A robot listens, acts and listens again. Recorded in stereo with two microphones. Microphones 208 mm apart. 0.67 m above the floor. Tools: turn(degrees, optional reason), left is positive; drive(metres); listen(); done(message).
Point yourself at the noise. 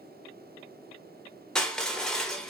turn(degrees=30)
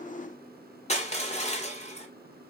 turn(degrees=145, reason="So it is at 145° left.")
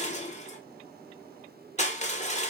turn(degrees=35, reason="The crushing is now 35° left.")
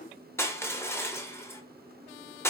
turn(degrees=15, reason="The crushing is now 15° left.")
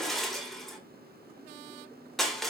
done("Found it: crushing, straight ahead.")